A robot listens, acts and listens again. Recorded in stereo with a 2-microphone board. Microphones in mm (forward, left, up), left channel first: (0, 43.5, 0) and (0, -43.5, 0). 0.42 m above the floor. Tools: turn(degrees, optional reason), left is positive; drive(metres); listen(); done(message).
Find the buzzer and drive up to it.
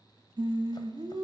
listen()
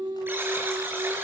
turn(degrees=-25, reason="The buzzer: about 25° right or 155° right.")
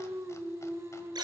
turn(degrees=-130, reason="So it is at 130° right.")
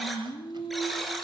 drive(metres=1.0)
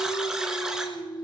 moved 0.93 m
drive(metres=1.0)
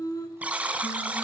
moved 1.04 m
turn(degrees=-15, reason="The buzzer is now 15° right.")
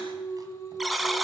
drive(metres=1.0)
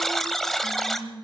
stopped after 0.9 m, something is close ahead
done("I am next to the buzzer.")